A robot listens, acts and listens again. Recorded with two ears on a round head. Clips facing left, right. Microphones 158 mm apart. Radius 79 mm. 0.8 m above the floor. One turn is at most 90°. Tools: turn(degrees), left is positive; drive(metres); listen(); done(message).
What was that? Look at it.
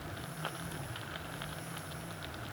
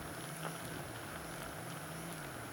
listen()
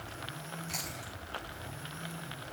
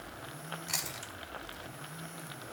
turn(degrees=-90)
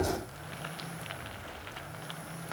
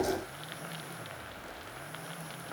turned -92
listen()
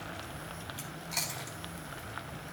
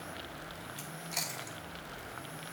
turn(degrees=-10)
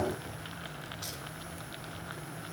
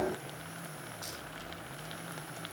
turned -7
listen()
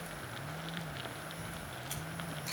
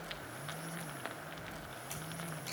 done("Facing the chewing.")